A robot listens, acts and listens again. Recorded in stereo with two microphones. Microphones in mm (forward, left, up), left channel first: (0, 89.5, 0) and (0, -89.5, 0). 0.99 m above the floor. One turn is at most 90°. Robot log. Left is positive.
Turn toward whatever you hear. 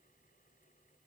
cmd idle
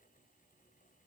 cmd idle
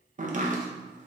note: The chopping: about 45° right or 135° right.
cmd yaw -45
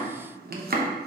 note: So it is at 80° right.
cmd yaw -80
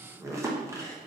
note: The chopping is now 20° right.
cmd yaw -20
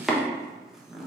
end: Found it: chopping, straight ahead.